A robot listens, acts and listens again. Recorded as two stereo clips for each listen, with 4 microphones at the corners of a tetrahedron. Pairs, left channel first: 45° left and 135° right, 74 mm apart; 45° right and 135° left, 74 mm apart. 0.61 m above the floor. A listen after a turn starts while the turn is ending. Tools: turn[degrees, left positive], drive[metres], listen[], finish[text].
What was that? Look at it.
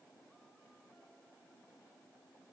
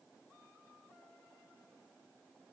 Action: listen[]
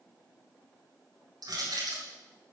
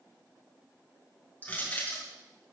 Thought: The crushing: 115° right.
Action: turn[-115]
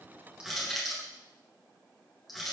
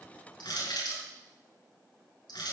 Thought: The crushing is now 45° right.
Action: turn[-45]
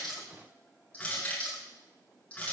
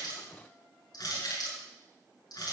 Thought: The crushing is now 25° right.
Action: turn[-25]
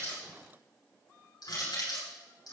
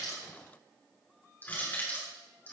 Thought: The crushing is now 20° left.
Action: turn[20]
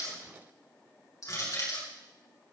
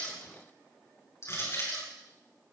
Action: finish[Found it: crushing, straight ahead, over 4 m away.]